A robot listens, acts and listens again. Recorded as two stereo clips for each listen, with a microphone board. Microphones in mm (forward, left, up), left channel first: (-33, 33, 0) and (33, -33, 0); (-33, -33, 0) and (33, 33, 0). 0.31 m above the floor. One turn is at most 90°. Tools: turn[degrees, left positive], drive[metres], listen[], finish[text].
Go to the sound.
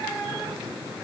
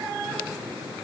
Action: listen[]
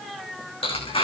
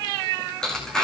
Thought: The tearing paper: 140° left.
Action: turn[90]
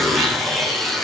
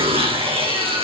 Thought: The tearing paper is now 45° left.
Action: turn[45]
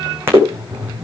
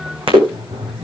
Thought: The tearing paper is now 20° left.
Action: turn[20]
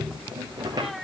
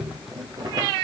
Action: listen[]
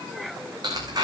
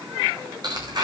Action: drive[1.0]
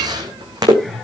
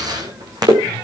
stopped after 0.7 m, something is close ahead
Action: finish[Something is in my way. I am facing the tearing paper but have not reached it.]